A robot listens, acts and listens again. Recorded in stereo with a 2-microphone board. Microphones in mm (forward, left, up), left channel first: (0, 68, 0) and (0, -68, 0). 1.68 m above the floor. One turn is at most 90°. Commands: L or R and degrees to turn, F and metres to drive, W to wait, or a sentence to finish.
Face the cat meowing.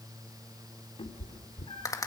L40
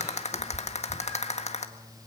W
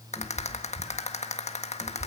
R10
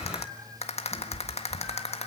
Found it: a cat meowing, straight ahead.